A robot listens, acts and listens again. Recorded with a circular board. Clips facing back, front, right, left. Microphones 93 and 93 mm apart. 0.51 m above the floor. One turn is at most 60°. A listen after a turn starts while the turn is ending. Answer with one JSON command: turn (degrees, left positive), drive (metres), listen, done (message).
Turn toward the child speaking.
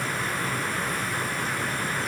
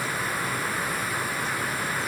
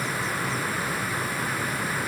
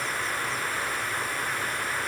{"listen": true}
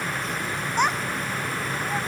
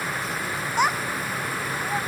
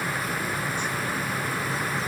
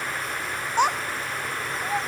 {"turn": 60}
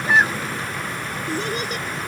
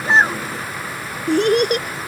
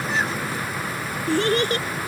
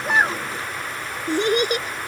{"turn": 20}
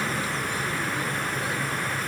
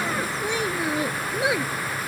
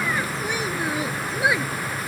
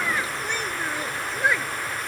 {"turn": -10}
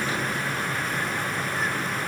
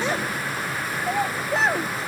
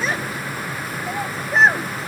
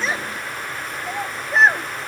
{"done": "Facing the child speaking."}